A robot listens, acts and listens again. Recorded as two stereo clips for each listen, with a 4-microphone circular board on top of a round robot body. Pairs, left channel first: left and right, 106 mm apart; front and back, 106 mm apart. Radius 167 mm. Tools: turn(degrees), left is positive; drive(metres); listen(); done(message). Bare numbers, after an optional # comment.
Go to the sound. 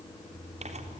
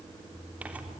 listen()
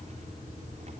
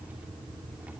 # The tearing paper: 105° right.
turn(-105)
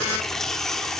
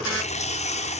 drive(1.0)
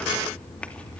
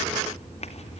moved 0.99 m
# The tearing paper is now 10° left.
turn(10)
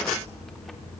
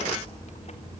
drive(1.0)
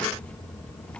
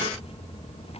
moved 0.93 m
# The tearing paper is now 10° left.
turn(10)
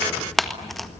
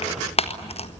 drive(1.0)
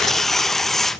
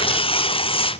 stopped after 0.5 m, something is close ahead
done("Arrived at the tearing paper, straight ahead.")